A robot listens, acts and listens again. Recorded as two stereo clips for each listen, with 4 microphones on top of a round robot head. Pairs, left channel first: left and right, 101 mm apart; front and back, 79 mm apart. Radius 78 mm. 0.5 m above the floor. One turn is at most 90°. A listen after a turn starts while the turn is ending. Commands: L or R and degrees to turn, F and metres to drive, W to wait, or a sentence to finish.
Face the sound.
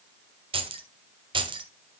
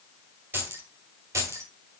R90
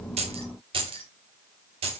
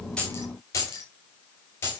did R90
R65
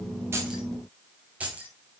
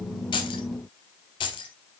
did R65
R15
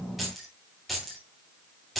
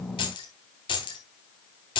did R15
Found it: keys jangling, straight ahead.